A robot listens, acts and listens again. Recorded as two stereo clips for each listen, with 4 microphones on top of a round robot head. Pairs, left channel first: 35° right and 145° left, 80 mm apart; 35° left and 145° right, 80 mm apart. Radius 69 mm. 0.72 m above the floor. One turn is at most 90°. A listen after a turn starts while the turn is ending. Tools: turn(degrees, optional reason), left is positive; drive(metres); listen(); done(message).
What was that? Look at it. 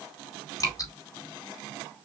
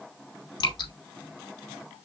turn(degrees=10, reason="The dripping: 10° left.")
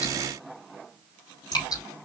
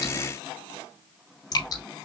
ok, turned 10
done("Facing the dripping.")